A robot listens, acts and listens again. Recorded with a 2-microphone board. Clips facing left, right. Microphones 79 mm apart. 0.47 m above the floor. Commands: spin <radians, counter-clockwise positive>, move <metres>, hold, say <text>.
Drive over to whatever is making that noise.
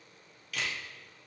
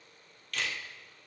spin 0.52
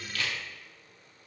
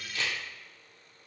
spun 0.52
spin -0.44
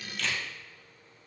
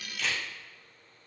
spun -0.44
move 1.0
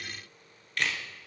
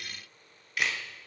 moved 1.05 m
move 1.0
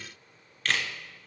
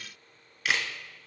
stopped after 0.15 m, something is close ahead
spin -0.17
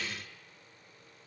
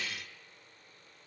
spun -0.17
hold
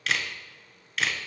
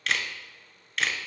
say Arrived at the camera shutter, straight ahead.